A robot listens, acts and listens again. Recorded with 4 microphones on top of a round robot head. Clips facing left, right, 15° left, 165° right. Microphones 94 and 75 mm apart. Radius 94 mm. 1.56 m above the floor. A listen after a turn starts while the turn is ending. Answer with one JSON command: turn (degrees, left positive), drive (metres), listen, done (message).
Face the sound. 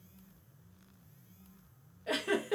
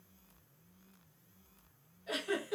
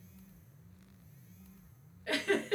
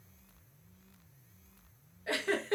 {"turn": 135}
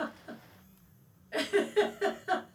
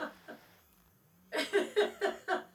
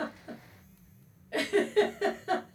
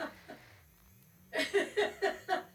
{"done": "Facing the giggle, 1 to 2 m away."}